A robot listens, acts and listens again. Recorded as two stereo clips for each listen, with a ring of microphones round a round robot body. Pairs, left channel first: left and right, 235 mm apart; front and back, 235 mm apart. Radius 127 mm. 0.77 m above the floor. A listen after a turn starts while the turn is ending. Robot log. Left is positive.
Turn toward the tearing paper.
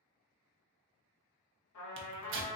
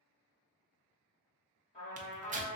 note: The tearing paper: 120° right.
cmd yaw -120
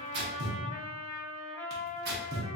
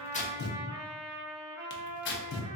note: The tearing paper is now 40° right.
cmd yaw -40
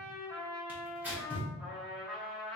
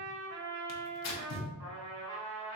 end: Found it: tearing paper, straight ahead.